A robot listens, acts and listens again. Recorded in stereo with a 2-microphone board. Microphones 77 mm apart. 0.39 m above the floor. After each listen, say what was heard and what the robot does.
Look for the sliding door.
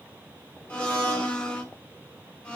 Keep listening.
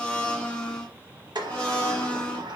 The sliding door: about 75° right or 105° right. Turn 75° right.
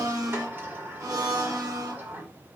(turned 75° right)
So it is at 30° right. Turn 30° right.
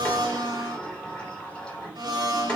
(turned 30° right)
The sliding door is now 15° left. Turn 15° left.
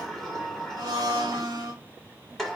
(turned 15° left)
Found it: a sliding door, straight ahead, 1 to 2 m away.